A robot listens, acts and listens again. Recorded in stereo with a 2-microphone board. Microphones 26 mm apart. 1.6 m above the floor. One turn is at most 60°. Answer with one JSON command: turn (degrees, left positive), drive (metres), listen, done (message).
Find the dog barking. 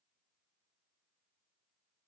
{"listen": true}
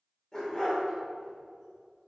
{"turn": 25}
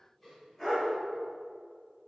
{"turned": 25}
{"turn": 10}
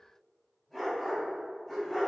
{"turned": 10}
{"done": "Found it: a dog barking, straight ahead."}